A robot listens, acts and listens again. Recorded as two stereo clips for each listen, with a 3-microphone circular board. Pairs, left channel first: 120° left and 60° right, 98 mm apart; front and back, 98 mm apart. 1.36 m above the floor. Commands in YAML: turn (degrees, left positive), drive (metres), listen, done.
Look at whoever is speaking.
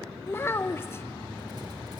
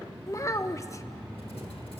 turn: 55
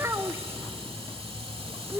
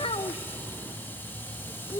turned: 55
done: "Found it: a child speaking, straight ahead."